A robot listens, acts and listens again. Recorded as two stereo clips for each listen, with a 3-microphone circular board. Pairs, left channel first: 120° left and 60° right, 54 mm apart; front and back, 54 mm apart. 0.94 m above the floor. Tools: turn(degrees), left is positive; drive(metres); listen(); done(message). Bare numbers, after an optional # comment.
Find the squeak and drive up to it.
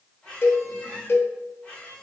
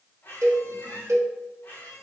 # The squeak: 50° left.
turn(50)
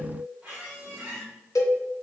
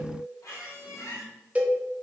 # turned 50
drive(1.0)
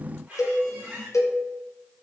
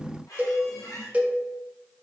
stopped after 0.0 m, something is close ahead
done("Something is in my way. I am facing the squeak but have not reached it.")